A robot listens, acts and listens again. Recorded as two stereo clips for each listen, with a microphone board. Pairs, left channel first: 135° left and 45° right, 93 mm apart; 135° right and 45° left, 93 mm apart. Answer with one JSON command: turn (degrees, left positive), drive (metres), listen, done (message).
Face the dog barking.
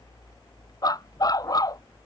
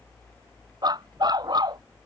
{"turn": 85}
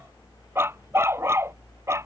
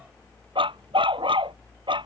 {"turn": 15}
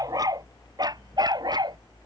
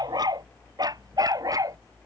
{"done": "Found it: a dog barking, straight ahead."}